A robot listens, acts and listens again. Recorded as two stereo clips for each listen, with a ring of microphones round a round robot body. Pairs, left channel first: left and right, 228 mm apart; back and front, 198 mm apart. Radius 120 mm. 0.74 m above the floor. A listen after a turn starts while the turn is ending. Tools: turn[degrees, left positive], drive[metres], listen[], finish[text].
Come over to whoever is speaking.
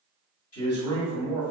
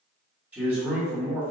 Thought: The man speaking: 85° left.
Action: turn[85]
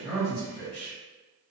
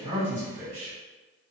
Thought: The man speaking is now 10° left.
Action: turn[10]
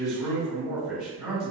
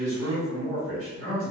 Action: drive[1.0]
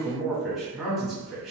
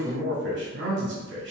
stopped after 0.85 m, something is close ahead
Action: finish[Arrived at the man speaking, straight ahead.]